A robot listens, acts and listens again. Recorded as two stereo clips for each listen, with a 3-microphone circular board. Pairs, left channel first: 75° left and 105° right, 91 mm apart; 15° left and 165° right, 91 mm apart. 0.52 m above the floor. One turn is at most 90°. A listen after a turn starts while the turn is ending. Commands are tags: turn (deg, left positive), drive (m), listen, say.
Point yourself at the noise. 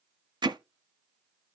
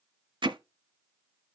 <turn deg="-90"/>
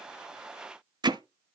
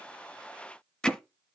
<turn deg="-65"/>
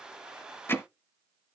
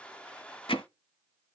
<turn deg="10"/>
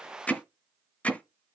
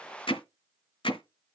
<say>Facing the hammering.</say>